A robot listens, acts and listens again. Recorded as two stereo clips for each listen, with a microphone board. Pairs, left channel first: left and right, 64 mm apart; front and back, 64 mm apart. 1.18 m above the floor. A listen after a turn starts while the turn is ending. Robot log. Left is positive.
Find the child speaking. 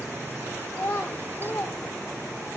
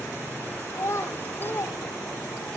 note: The child speaking: 50° left.
cmd yaw +50
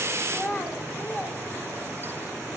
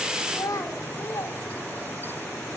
note: The child speaking is now 40° left.
cmd yaw +40
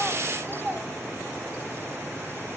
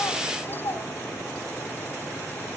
note: The child speaking is now 15° left.
cmd yaw +15
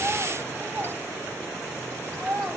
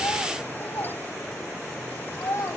end: Facing the child speaking, over 4 m away.